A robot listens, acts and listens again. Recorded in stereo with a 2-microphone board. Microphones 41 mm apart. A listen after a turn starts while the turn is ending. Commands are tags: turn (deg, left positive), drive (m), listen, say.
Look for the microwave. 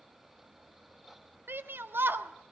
<listen/>
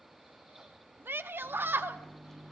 <turn deg="30"/>
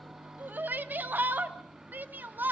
<turn deg="-15"/>
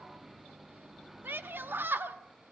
<say>Facing the microwave.</say>